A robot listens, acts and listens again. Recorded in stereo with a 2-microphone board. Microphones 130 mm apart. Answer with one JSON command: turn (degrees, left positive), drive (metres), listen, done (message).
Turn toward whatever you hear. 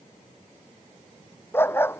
{"turn": 15}
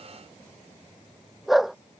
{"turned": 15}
{"turn": 30}
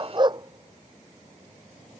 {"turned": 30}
{"turn": -35}
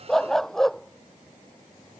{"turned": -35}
{"done": "Facing the dog barking."}